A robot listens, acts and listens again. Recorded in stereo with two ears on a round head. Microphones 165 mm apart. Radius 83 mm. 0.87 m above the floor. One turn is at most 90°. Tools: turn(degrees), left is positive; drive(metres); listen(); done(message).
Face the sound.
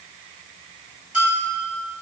turn(degrees=-30)
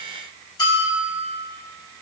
turn(degrees=25)
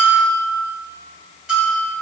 done("Facing the bell.")